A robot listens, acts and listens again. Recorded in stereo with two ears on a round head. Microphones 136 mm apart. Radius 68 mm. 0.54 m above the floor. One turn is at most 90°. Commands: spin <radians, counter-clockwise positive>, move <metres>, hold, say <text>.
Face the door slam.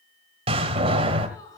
spin -0.70
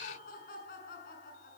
hold
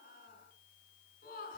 say I heard a door slam, but can't make it out now. It was about straight ahead or 100° right.